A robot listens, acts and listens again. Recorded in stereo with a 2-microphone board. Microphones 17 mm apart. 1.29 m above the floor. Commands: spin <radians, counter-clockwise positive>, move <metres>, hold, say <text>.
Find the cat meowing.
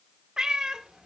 spin -0.87
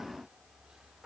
hold
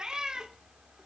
spin -1.13
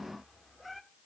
hold
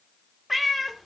say Found it: a cat meowing, straight ahead.